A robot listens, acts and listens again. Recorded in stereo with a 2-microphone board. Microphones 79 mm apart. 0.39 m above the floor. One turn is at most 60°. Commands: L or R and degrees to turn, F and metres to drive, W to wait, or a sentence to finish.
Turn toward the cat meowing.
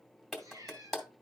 R50
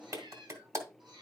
R60
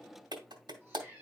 R20
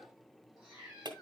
Facing the cat meowing, over 4 m away.